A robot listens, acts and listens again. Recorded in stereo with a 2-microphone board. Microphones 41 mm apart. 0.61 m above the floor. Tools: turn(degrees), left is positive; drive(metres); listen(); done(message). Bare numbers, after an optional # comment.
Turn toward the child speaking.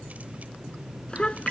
# The child speaking: about 30° left or 150° left.
turn(30)
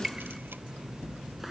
done("Found it: a child speaking, straight ahead.")